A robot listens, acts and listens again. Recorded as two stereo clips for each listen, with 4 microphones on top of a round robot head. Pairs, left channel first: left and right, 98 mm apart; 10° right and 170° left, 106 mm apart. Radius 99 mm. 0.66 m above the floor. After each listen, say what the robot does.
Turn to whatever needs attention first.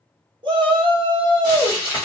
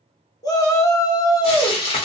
Turn 60° right.
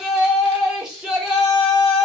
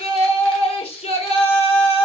Turn 10° right.
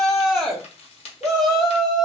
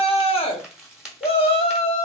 Facing the shout.